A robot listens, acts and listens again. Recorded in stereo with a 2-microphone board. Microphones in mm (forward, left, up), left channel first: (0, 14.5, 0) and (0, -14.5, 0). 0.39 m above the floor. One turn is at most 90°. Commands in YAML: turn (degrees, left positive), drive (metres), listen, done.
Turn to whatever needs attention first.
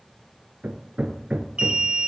turn: -35
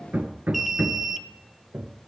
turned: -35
done: "Facing the alarm, under 1 m away."